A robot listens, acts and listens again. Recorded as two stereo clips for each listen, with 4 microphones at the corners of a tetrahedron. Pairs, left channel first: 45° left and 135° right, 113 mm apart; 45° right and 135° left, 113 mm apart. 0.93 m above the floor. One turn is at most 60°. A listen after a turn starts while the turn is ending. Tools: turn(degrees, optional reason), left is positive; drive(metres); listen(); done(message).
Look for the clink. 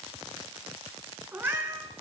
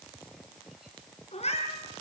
listen()
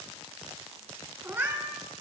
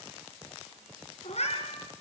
listen()
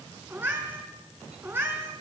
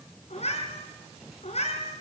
done("I can't make out a clink, only a cat meowing.")